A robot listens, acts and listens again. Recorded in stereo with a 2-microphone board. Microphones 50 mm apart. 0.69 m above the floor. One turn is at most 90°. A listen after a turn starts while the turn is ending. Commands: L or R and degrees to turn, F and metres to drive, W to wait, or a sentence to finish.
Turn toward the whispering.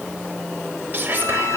R40
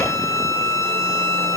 W
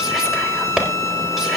Facing the whispering.